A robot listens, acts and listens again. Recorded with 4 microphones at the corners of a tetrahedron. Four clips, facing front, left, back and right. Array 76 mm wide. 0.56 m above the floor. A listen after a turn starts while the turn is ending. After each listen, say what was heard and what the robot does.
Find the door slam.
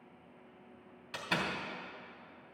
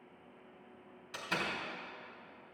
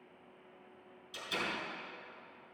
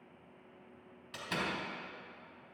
Found it: a door slam, straight ahead, 2 to 4 m away.